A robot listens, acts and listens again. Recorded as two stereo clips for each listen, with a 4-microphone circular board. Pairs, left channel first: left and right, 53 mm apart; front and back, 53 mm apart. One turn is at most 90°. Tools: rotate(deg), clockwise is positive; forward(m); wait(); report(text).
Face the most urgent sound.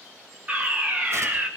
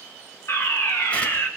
rotate(25)
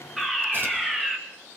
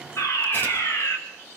report("Facing the fire alarm, 2 to 4 m away.")